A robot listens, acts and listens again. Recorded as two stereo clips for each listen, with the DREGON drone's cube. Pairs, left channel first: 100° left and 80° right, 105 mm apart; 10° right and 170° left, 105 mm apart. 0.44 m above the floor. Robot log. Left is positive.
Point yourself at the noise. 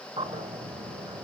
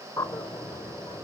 note: The bird: 70° right.
cmd yaw -70
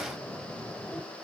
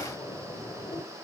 cmd idle
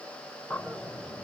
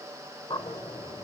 cmd idle
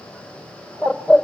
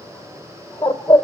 note: The bird is now 15° left.
cmd yaw +15
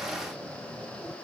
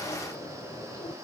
cmd idle
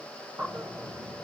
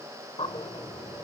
end: Found it: a bird, straight ahead.